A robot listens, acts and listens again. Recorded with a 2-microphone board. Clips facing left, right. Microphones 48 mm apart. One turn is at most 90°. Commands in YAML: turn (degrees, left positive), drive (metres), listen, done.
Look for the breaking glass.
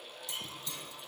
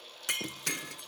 turn: -75
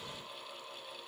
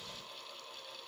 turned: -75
listen: true
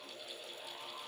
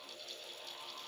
done: "I heard breaking glass, but can't make it out now. It was about straight ahead or 30° right."